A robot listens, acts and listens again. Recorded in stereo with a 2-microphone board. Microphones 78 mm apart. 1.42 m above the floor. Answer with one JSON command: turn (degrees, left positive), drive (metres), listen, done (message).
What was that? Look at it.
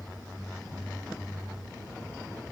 {"listen": true}
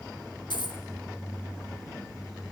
{"turn": 90}
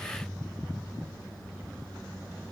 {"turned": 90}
{"done": "I heard a dropped coin from this way, but can't make it out now."}